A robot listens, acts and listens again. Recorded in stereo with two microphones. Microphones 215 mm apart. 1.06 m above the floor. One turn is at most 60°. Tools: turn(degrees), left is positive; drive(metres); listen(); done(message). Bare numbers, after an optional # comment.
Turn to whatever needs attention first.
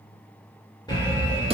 # The alarm: about 20° left or 160° left.
turn(20)
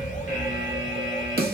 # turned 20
# So it is at 135° left.
turn(60)
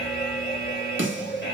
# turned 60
# The alarm is now 120° left.
turn(60)
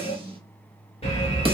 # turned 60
# The alarm is now 35° left.
turn(35)
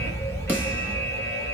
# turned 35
# The alarm is now 15° left.
turn(15)
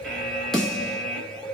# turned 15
done("Facing the alarm.")